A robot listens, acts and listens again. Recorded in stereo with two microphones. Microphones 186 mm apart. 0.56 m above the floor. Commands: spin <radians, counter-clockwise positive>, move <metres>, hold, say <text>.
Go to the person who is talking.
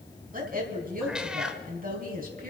spin -0.87
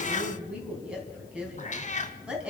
move 1.0
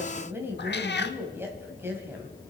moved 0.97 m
spin -0.26
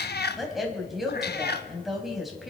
move 1.0
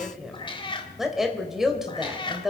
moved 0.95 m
move 1.0
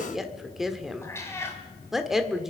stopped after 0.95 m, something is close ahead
say I am next to the woman speaking.